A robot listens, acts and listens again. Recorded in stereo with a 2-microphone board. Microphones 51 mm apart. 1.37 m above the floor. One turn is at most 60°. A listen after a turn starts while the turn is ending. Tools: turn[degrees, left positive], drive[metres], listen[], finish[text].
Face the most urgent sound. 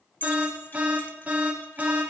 Thought: The alarm: about 30° right or 150° right.
Action: turn[-30]
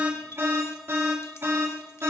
Thought: So it is at 125° right.
Action: turn[-60]
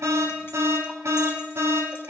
Thought: The alarm is now 70° right.
Action: turn[-60]
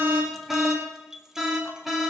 Action: finish[Facing the alarm, over 4 m away.]